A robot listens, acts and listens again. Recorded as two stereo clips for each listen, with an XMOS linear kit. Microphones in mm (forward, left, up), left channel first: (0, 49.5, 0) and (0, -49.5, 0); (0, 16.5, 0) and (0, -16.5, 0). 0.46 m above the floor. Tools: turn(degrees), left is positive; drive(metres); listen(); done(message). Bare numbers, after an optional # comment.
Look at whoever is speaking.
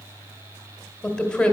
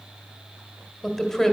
turn(30)
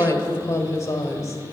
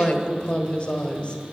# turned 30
# So it is at 140° left.
turn(140)
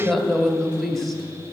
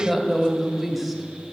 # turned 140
done("Facing the woman speaking, 1 to 2 m away.")